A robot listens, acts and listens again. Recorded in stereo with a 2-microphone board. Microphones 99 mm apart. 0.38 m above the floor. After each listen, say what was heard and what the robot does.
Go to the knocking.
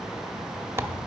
Keep listening.
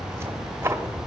Keep listening.
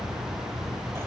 I can't make out knocking, only tearing paper.